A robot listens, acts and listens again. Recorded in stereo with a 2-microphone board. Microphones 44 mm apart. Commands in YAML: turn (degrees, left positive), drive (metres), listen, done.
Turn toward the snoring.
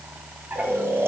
turn: -70
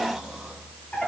listen: true
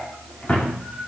listen: true
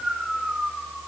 done: "Facing the snoring."